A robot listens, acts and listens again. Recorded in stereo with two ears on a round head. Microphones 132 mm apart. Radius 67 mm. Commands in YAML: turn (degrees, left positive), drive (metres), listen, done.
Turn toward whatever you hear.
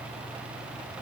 listen: true
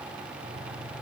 listen: true
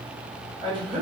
turn: -35
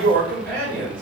turn: -105
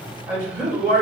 turn: -15
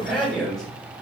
done: "Found it: a man speaking, straight ahead."